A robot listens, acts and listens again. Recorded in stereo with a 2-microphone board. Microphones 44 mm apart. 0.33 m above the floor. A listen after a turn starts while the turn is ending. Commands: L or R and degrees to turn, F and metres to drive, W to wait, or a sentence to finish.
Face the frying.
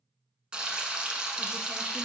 R20
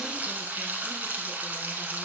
R140
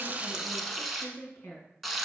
Facing the frying, under 1 m away.